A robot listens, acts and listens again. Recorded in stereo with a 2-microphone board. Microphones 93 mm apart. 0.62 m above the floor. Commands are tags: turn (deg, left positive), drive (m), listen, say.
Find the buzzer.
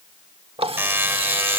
<turn deg="-20"/>
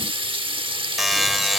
<say>Found it: a buzzer, straight ahead.</say>